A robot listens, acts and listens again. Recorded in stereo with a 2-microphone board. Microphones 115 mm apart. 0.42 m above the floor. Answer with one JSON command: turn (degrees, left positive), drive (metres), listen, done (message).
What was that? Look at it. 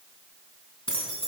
{"turn": 50}
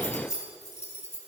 {"turn": 70}
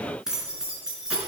{"done": "Facing the keys jangling, 2 to 4 m away."}